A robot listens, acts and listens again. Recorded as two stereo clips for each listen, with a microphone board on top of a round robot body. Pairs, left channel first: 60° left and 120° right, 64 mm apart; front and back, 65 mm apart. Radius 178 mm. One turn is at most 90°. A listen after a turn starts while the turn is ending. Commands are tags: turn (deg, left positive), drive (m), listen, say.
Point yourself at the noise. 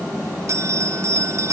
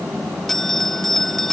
<turn deg="-85"/>
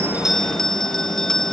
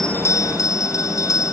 <turn deg="-20"/>
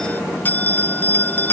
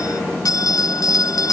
<say>Found it: a bell, straight ahead.</say>